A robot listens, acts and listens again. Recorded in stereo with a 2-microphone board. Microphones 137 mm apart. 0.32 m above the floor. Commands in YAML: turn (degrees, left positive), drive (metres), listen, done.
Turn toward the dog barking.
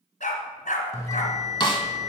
turn: 75
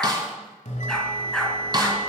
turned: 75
done: "Found it: a dog barking, straight ahead, 1 to 2 m away."